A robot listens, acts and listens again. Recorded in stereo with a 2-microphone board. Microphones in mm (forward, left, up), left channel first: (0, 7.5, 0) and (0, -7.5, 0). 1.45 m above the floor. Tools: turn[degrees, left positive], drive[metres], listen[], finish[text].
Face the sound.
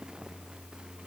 Action: listen[]
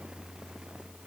Action: listen[]
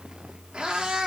Thought: The cat meowing: about 70° right or 110° right.
Action: turn[-70]
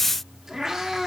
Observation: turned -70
Thought: So it is at 35° right.
Action: turn[-35]
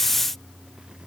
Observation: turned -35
Action: listen[]
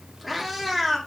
Action: finish[Found it: a cat meowing, straight ahead, 1 to 2 m away.]